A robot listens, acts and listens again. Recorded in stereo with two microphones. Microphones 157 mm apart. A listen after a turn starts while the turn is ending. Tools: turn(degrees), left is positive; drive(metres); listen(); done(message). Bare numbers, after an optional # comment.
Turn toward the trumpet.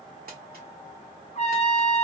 # The trumpet: about 45° left or 135° left.
turn(45)
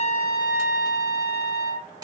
# So it is at 90° left.
turn(90)
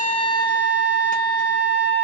# The trumpet is now 10° left.
turn(10)
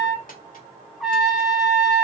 done("Facing the trumpet.")